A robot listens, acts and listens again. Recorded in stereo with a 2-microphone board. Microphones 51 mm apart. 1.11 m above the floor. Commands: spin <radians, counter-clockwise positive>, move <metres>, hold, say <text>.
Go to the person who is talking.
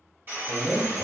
spin 0.52
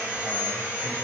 hold
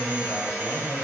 spin 2.44
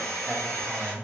move 1.0
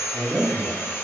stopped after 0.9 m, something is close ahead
say I am next to the man speaking.